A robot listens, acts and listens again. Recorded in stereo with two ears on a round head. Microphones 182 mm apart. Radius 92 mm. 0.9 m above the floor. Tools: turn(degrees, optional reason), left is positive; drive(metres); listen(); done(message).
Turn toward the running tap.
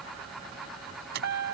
listen()
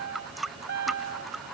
turn(degrees=30)
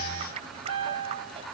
listen()
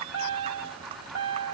listen()
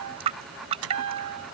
turn(degrees=-30, reason="So it is at 30° right.")
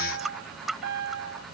done("Found it: a running tap, straight ahead.")